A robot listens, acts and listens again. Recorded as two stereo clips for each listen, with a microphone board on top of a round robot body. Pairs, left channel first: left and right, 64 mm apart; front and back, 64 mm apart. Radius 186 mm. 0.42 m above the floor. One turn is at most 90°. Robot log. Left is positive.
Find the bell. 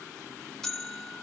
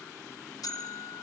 end: Found it: a bell, straight ahead.